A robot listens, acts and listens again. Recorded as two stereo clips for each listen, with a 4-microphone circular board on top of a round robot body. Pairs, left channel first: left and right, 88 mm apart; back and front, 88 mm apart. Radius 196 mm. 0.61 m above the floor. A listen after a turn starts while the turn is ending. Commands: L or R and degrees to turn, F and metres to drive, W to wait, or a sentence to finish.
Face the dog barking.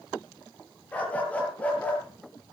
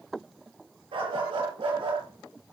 L20
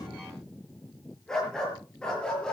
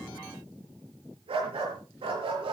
L10
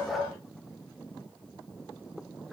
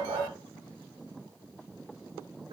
Found it: a dog barking, straight ahead.